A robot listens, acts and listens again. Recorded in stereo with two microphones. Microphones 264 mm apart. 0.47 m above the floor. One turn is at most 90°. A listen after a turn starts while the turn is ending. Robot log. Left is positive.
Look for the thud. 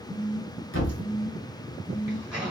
note: The thud: about 50° left or 130° left.
cmd yaw +50
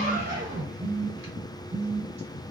cmd idle
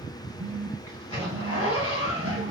end: I heard a thud, but can't make it out now. It was about straight ahead or 80° left.